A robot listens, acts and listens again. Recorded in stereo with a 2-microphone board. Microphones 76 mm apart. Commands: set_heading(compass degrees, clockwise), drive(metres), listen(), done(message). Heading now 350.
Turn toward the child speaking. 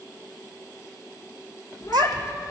set_heading(55)
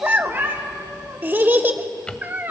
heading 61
set_heading(91)
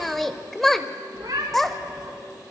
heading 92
done("Found it: a child speaking, straight ahead, 1 to 2 m away.")